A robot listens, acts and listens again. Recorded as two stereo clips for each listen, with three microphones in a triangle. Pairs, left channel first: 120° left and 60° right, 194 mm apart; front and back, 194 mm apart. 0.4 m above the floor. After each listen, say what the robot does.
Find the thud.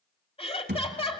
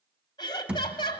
Turn 95° right.
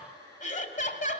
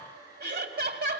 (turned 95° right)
Facing where the thud came from. I can't hear it now.